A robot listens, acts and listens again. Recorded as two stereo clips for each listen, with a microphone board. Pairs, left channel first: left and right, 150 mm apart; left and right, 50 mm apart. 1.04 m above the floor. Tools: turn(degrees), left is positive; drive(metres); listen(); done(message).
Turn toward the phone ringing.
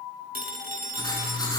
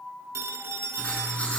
turn(degrees=-90)
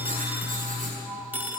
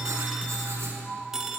turn(degrees=-10)
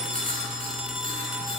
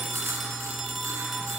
done("Facing the phone ringing.")